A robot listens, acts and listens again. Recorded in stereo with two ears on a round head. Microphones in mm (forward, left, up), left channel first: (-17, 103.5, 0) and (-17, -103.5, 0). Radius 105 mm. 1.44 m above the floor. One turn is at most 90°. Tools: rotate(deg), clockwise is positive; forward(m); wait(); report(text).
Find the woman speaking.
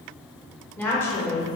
rotate(-30)
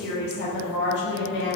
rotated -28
rotate(-90)
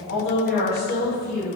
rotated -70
rotate(-40)
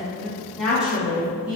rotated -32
report("Facing the woman speaking, 2 to 4 m away.")